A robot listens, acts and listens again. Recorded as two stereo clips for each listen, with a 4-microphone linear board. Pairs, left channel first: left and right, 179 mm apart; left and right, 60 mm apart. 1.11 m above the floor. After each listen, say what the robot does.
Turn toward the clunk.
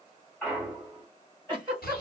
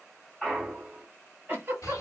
Turn 30° left.
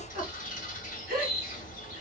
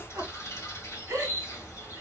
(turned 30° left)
Keep listening.
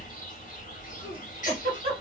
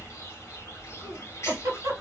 I heard a clunk, but can't make it out now. It was about 25° right or 145° left.